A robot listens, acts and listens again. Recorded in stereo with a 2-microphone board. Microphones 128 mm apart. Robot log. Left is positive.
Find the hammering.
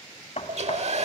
note: The hammering: about 60° left or 120° left.
cmd yaw +60
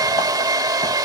cmd idle
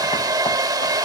cmd idle
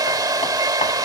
end: I heard hammering, but can't make it out now. It was about straight ahead or 60° left.